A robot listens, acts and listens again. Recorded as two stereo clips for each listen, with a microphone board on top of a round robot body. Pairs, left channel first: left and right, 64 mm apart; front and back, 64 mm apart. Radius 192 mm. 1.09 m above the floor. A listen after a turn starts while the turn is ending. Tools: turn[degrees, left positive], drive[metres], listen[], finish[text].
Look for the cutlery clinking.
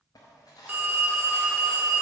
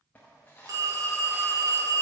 Thought: The cutlery clinking: 65° left.
Action: turn[65]
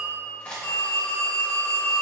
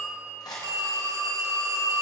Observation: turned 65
Thought: The cutlery clinking is now 20° left.
Action: turn[20]
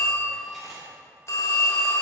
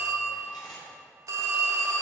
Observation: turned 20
Action: listen[]
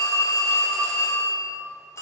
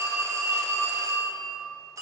Action: listen[]
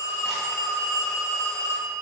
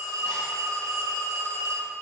Action: finish[I heard cutlery clinking from this way, but can't make it out now.]